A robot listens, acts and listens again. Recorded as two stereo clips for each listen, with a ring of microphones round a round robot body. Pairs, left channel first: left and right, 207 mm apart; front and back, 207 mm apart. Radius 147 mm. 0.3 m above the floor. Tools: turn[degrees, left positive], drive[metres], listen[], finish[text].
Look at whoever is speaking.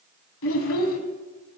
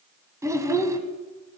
Thought: The child speaking: 105° left.
Action: turn[105]
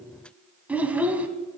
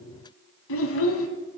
Action: finish[Found it: a child speaking, straight ahead.]